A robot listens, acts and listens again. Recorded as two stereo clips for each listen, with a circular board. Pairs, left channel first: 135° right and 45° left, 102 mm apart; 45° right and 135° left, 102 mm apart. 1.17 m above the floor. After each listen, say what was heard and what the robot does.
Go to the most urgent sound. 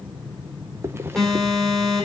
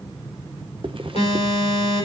The alarm: 50° right. Turn 50° right.
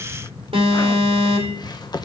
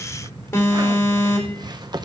The alarm is now 20° left. Turn 20° left.
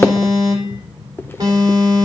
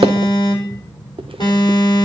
Drive 1.0 m forward.
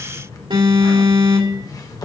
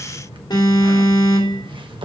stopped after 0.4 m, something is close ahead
Something is in my way. I am facing the alarm but have not reached it.